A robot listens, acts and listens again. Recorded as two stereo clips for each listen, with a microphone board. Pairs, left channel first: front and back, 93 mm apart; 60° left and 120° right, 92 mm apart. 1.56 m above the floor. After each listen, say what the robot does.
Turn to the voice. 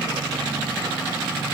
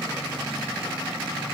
Keep listening.
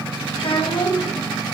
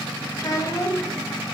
Turn 10° left.
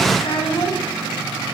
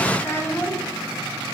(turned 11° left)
Facing the child speaking, 1 to 2 m away.